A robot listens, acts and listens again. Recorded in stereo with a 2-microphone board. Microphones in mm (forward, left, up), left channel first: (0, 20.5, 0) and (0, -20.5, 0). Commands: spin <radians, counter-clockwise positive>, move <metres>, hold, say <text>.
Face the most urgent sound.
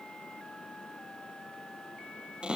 hold
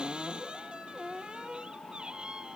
hold
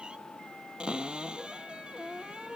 say I can't make out anything urgent to turn to.